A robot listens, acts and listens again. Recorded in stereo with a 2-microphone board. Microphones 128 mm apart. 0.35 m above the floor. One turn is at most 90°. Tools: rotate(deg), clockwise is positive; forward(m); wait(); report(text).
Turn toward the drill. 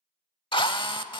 rotate(-40)
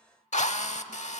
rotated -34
rotate(-90)
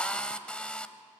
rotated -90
rotate(-10)
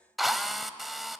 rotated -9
report("Facing the drill.")